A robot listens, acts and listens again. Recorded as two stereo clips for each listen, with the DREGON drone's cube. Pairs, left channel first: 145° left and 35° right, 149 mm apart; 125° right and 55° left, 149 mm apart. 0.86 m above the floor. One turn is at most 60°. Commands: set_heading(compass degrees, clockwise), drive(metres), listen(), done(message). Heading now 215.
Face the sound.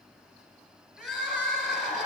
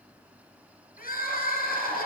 set_heading(275)
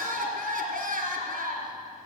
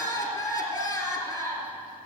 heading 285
set_heading(335)
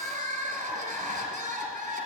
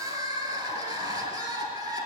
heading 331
done("Found it: crying, straight ahead.")